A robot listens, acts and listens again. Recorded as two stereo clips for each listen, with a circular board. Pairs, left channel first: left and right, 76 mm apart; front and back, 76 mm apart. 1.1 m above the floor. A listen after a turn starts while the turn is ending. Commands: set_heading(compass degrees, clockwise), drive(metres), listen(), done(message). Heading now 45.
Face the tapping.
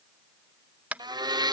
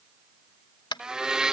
set_heading(65)
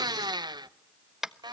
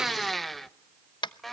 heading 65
done("Facing the tapping.")